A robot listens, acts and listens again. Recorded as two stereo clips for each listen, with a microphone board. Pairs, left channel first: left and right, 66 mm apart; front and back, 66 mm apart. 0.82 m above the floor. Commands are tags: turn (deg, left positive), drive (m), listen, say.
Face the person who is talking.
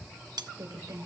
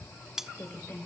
<turn deg="-60"/>
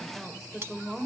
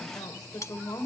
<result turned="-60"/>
<say>Found it: a woman speaking, straight ahead, 2 to 4 m away.</say>